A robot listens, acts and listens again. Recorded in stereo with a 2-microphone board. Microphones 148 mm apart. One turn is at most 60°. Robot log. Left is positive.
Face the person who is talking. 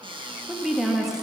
cmd yaw -30
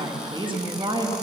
note: So it is at 150° right.
cmd yaw -60
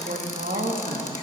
note: The woman speaking is now 85° right.
cmd yaw -60
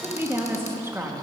note: The woman speaking is now 15° right.
cmd yaw -15
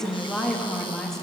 end: Facing the woman speaking, 1 to 2 m away.